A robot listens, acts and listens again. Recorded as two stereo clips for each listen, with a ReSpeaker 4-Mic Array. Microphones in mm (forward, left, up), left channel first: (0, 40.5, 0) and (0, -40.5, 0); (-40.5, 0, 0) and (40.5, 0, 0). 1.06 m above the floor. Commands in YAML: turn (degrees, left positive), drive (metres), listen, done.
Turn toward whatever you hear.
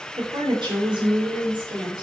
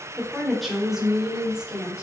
turn: -80
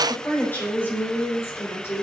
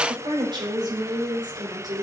turn: 35
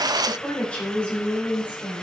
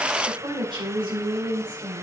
turn: 20
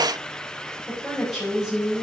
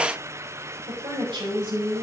done: "Facing the woman speaking, over 4 m away."